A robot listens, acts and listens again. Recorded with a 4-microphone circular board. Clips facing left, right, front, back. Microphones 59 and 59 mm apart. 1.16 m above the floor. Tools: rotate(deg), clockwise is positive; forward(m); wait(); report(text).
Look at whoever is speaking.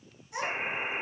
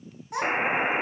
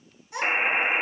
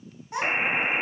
rotate(125)
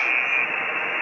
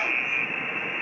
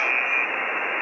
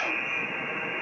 wait()
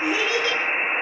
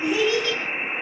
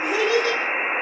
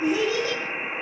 rotate(20)
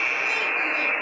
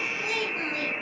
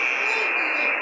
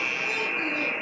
wait()
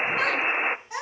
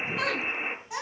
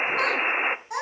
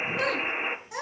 report("Found it: a child speaking, straight ahead.")